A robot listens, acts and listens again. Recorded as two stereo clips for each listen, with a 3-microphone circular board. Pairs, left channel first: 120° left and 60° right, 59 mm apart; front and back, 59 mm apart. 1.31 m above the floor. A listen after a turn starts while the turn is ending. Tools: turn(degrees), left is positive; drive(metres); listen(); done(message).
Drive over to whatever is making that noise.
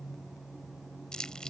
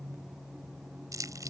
turn(degrees=-160)
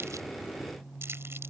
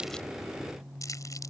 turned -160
turn(degrees=-15)
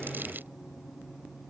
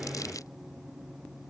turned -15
listen()
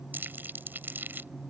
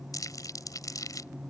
drive(metres=1.0)
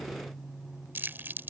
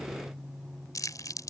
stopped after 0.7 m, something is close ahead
done("Something is in my way. I am facing the crumpling but have not reached it.")